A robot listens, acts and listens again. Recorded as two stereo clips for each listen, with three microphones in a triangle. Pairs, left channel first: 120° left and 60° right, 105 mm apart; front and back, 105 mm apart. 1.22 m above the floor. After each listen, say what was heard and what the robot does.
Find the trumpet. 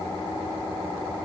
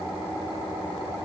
Keep listening.
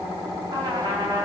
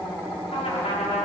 Facing the trumpet.